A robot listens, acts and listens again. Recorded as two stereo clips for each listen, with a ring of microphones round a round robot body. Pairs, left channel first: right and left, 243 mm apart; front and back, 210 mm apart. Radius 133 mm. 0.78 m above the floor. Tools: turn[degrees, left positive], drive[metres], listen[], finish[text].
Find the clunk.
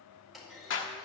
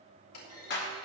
Action: finish[Found it: a clunk, straight ahead, 2 to 4 m away.]